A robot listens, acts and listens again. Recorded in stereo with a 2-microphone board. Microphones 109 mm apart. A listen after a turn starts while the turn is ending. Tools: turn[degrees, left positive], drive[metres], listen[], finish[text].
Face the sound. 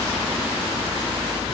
Action: listen[]
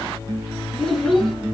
Action: turn[30]
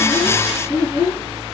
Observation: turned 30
Thought: So it is at 30° right.
Action: turn[-30]
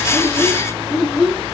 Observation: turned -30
Action: finish[Found it: a child speaking, straight ahead, 2 to 4 m away.]